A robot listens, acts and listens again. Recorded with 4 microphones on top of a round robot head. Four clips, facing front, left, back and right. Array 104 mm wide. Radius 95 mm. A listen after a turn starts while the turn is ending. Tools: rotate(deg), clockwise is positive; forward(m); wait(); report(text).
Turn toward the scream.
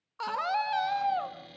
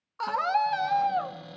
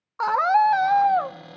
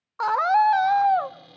rotate(140)
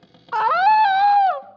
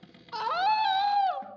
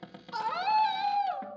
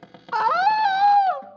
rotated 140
rotate(20)
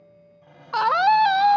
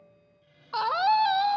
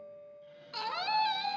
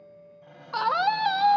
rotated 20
report("Facing the scream.")